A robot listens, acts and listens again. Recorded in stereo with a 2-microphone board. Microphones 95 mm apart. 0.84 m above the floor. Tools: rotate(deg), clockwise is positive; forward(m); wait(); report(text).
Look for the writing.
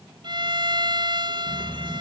rotate(-20)
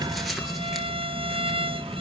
report("Found it: writing, straight ahead.")